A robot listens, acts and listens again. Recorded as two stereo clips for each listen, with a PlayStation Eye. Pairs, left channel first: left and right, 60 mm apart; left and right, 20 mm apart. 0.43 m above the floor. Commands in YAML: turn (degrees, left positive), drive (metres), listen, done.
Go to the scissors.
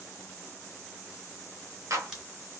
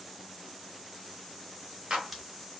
listen: true
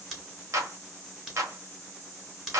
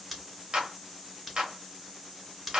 turn: -30
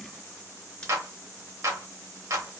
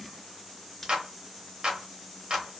listen: true
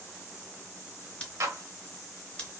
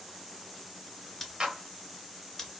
turn: 20
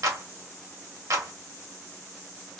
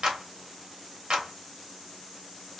drive: 1.0
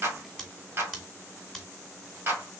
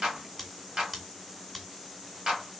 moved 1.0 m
drive: 1.0
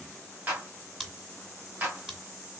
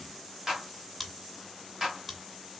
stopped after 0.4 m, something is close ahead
turn: -15
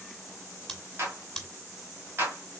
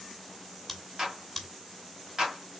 done: "I am next to the scissors."